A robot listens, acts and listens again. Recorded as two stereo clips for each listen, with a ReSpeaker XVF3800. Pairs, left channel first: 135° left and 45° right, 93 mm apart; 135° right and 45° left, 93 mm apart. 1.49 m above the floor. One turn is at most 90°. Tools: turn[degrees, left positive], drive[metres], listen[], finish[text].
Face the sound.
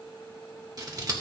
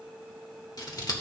Thought: The scissors: 90° right.
Action: turn[-90]
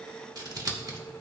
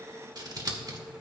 Action: finish[Facing the scissors.]